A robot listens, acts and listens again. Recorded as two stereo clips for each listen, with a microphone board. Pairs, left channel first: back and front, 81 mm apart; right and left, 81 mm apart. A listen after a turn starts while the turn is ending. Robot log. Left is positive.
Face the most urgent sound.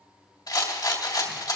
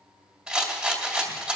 cmd idle
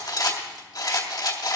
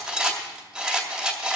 cmd idle
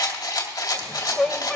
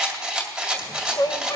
note: The shout: 95° right.
cmd yaw -95
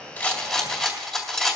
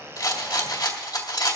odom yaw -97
cmd idle
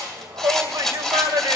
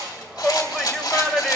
end: Facing the shout, 1 to 2 m away.